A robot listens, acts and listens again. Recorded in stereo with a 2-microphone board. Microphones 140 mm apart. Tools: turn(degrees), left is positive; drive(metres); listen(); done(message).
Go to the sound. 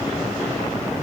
listen()
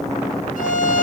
turn(degrees=70)
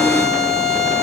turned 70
drive(metres=1.0)
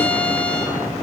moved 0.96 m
turn(degrees=10)
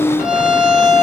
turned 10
drive(metres=1.0)
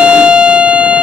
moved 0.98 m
turn(degrees=-10)
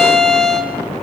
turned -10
drive(metres=1.0)
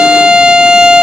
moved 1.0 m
drive(metres=1.0)
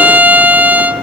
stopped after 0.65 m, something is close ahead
turn(degrees=-10)
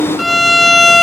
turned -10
done("I am next to the violin.")